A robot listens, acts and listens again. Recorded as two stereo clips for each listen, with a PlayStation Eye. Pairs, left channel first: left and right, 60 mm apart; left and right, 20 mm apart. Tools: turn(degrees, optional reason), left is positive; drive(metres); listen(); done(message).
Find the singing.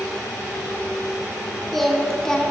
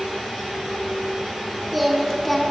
turn(degrees=30)
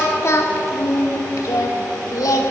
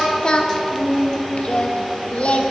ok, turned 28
turn(degrees=110, reason="So it is at 110° left.")
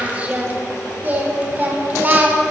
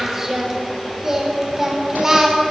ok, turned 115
turn(degrees=-30, reason="The singing is now 30° right.")
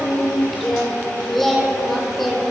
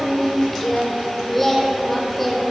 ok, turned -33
done("Facing the singing.")